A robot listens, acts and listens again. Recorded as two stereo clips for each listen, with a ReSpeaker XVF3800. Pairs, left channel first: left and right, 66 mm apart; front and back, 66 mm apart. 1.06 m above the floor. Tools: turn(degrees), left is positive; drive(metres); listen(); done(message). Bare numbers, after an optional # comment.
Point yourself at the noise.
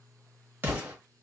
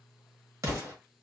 # The explosion: 150° right.
turn(-150)
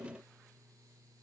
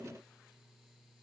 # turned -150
done("I heard an explosion from this way, but can't make it out now.")